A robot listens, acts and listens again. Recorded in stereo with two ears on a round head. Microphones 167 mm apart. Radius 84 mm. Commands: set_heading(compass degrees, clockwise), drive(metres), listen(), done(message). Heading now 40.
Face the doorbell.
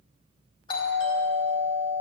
set_heading(15)
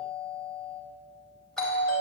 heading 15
done("Found it: a doorbell, straight ahead, 2 to 4 m away.")